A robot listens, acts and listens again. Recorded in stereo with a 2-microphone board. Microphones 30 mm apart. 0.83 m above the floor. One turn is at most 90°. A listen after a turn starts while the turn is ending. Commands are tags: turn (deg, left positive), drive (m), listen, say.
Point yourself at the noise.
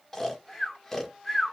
<turn deg="30"/>
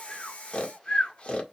<turn deg="90"/>
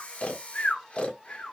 <turn deg="50"/>
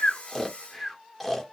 <say>Found it: snoring, straight ahead, 1 to 2 m away.</say>